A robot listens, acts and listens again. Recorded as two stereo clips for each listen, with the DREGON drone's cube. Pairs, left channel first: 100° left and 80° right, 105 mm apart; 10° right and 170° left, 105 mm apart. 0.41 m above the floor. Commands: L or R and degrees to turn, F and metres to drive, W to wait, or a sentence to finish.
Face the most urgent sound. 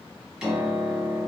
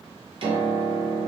W
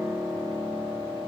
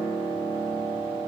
W
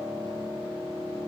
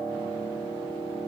I can't make out anything urgent, only a piano.